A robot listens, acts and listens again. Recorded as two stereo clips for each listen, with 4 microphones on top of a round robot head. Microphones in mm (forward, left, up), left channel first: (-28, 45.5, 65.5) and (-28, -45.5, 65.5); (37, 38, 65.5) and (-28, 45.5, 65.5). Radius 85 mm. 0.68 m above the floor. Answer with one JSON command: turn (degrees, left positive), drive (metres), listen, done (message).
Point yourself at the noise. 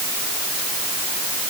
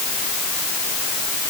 {"listen": true}
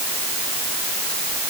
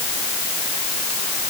{"listen": true}
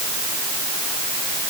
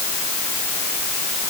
{"done": "I can't make out anything to turn to."}